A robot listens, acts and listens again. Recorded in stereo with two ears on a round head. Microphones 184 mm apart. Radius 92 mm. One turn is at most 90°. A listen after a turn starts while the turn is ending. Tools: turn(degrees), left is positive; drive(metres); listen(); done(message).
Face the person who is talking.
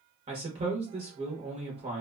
turn(degrees=-30)
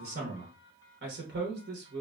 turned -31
turn(degrees=-90)
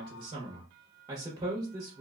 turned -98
turn(degrees=-20)
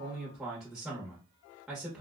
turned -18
done("Found it: a man speaking, straight ahead.")